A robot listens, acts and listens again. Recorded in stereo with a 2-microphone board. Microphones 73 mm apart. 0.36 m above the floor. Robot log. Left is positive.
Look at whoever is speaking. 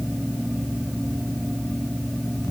cmd idle
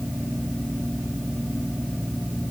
cmd idle
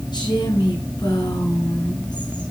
cmd yaw +90
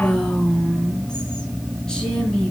note: So it is at 10° left.
cmd yaw +10
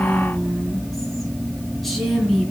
end: Found it: a woman speaking, straight ahead.